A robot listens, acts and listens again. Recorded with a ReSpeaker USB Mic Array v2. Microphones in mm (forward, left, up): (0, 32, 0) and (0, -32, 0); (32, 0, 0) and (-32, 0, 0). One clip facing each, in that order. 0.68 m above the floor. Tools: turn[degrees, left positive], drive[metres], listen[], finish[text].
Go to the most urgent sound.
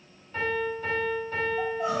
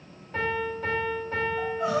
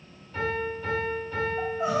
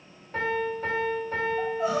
Thought: The crying: 65° right.
Action: turn[-65]
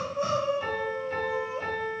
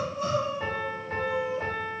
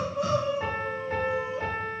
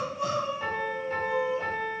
Thought: The crying is now 30° left.
Action: turn[30]
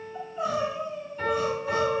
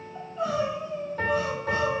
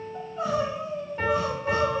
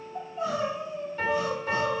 Action: drive[1.0]
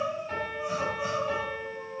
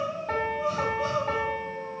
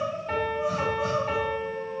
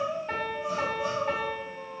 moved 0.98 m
Thought: The crying is now 15° left.
Action: turn[15]
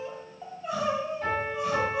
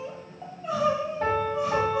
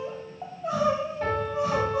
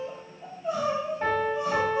Action: drive[1.0]
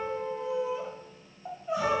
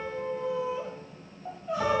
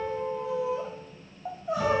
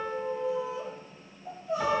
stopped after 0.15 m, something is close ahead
Action: finish[I am next to the crying.]